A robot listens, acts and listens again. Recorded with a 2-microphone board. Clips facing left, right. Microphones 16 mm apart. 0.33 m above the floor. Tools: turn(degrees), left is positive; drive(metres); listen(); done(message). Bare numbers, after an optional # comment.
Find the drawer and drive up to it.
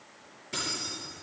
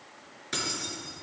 listen()
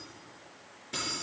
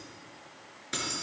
listen()
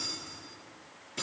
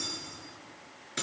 done("I can't make out a drawer, only keys jangling.")